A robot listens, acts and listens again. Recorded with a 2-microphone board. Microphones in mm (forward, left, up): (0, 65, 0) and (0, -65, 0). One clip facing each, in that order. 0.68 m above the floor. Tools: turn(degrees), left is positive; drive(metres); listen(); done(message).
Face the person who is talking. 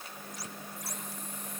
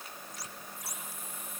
listen()
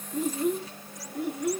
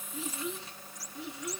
turn(degrees=50)
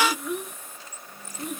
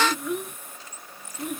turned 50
done("Found it: a child speaking, straight ahead.")